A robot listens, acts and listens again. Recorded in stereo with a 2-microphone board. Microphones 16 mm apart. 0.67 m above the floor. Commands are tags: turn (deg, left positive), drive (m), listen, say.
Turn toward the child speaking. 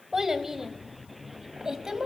<turn deg="-35"/>
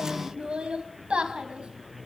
<turn deg="-100"/>
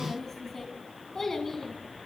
<turn deg="20"/>
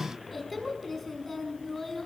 <say>Found it: a child speaking, straight ahead.</say>